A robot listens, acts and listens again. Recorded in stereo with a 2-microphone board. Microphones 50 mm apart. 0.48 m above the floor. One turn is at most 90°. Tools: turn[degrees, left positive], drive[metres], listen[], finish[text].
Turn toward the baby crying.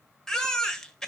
Action: turn[30]
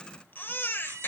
Thought: So it is at 135° left.
Action: turn[90]
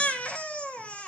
Thought: The baby crying is now 30° left.
Action: turn[30]
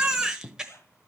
Thought: The baby crying is now 15° right.
Action: turn[-15]
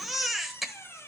Action: finish[Facing the baby crying, 1 to 2 m away.]